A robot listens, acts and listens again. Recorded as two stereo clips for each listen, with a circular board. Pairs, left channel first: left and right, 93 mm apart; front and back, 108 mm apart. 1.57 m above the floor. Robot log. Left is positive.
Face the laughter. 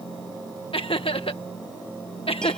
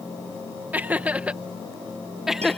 note: The laughter: 90° left.
cmd yaw +90
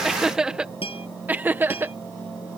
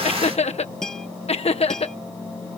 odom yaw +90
note: The laughter is now 25° right.
cmd yaw -25
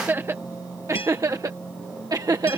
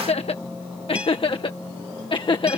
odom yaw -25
note: The laughter is now 40° right.
cmd yaw -40
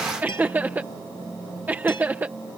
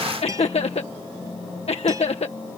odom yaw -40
note: The laughter is now 20° right.
cmd yaw -20
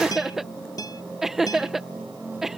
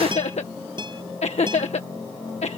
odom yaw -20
end: Facing the laughter.